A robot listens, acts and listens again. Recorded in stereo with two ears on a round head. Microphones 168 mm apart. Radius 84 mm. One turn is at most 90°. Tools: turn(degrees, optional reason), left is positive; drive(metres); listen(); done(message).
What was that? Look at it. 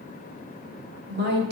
turn(degrees=-60, reason="The woman speaking: about 60° right or 120° right.")
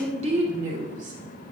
turn(degrees=-40, reason="So it is at 40° right.")
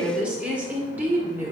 turn(degrees=-10, reason="The woman speaking is now 10° right.")
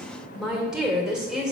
done("Found it: a woman speaking, straight ahead, 2 to 4 m away.")